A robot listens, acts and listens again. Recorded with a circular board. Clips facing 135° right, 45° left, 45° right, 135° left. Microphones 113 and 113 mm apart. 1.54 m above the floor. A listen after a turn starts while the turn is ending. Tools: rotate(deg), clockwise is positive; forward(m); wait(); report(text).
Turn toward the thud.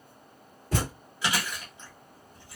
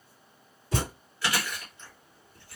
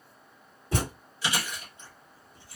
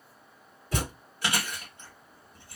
rotate(105)
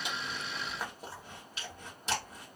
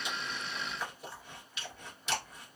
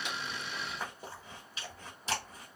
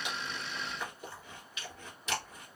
report("I heard a thud from this way, but can't make it out now.")